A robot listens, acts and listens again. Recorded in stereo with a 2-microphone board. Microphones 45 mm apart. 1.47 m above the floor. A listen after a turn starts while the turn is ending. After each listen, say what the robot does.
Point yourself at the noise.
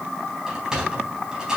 Turn 30° right.
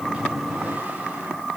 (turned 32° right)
Keep listening.
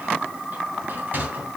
Turn 135° right.
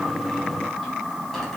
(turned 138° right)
Keep listening.
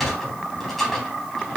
Found it: a sliding door, straight ahead.